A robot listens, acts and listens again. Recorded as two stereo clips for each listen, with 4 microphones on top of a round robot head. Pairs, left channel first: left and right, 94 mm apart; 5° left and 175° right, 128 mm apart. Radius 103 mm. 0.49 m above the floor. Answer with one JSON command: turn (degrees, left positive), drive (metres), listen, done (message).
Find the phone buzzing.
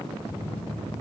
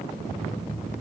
{"turn": 105}
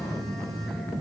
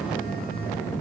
{"done": "Facing the phone buzzing, 1 to 2 m away."}